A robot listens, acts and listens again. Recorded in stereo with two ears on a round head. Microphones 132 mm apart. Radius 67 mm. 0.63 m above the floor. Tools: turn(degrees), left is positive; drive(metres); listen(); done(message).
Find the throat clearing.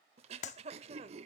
turn(degrees=-40)
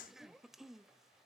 done("Found it: throat clearing, straight ahead.")